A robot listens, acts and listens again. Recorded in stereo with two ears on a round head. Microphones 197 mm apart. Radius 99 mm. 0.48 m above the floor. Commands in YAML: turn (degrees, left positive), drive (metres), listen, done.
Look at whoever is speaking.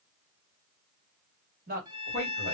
turn: -45
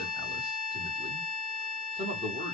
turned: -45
turn: -30
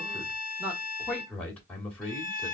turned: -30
done: "Found it: a man speaking, straight ahead, 1 to 2 m away."